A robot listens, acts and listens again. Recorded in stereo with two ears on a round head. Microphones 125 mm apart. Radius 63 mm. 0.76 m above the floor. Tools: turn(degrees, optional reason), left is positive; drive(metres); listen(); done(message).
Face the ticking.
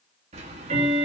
turn(degrees=-45, reason="The ticking: about 45° right or 135° right.")
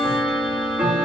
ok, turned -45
turn(degrees=-10, reason="So it is at 10° right.")
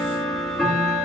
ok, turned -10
done("Facing the ticking, 1 to 2 m away.")